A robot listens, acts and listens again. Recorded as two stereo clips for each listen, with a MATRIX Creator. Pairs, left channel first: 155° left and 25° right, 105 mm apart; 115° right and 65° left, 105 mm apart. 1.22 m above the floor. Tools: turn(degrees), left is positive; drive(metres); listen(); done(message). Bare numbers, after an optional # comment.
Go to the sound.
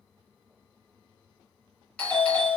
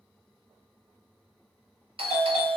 # The doorbell: 80° left.
turn(80)
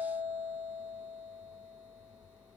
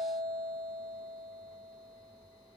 # The doorbell is now 25° left.
turn(25)
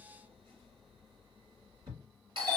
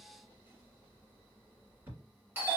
drive(1.0)
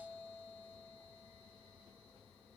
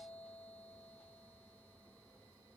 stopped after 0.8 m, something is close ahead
listen()
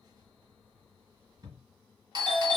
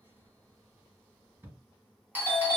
done("Arrived at the doorbell, straight ahead.")